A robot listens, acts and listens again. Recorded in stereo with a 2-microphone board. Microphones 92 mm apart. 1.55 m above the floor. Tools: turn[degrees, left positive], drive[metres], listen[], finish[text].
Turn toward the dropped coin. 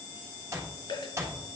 Thought: The dropped coin: about 55° left or 125° left.
Action: turn[55]
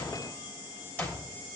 Action: listen[]
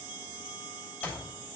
Action: finish[I heard a dropped coin, but can't make it out now. It was about straight ahead or 70° left.]